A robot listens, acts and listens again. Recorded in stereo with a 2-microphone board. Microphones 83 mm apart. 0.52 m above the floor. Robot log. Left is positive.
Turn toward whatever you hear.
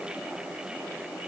cmd idle
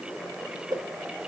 note: The whoosh: about 55° right or 125° right.
cmd yaw -55
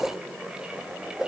note: So it is at 10° right.
cmd yaw -10
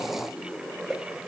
end: Found it: a whoosh, straight ahead.